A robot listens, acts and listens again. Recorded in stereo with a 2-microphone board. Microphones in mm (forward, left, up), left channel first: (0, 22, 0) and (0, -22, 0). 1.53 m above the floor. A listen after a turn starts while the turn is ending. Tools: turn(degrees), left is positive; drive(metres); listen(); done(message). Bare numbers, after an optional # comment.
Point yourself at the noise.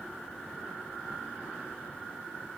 listen()
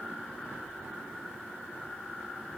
listen()
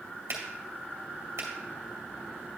turn(-90)
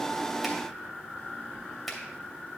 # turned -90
listen()
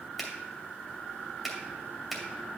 done("Found it: a finger snap, straight ahead, 2 to 4 m away.")